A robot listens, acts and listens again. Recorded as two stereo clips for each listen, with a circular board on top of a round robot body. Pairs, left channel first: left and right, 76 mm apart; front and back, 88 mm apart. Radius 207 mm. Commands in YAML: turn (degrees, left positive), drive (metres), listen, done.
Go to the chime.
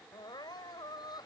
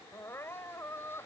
listen: true
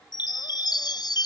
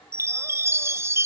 turn: 120
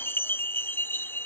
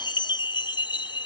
turn: 30
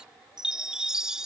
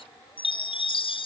drive: 1.0
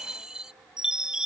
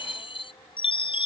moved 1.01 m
turn: -10
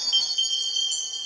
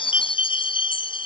drive: 1.0
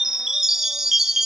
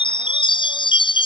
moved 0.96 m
drive: 1.0
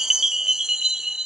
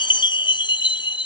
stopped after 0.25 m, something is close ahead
done: "I am next to the chime."